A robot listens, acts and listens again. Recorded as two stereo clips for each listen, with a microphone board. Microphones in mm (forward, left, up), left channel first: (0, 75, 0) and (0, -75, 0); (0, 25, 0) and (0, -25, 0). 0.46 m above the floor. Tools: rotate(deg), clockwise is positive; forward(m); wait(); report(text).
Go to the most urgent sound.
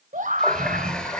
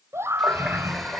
rotate(60)
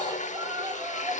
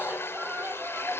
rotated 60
rotate(35)
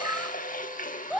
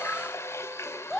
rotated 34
forward(1.0)
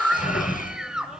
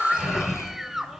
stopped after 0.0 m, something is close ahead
report("Something is in my way. I am facing the scream but have not reached it.")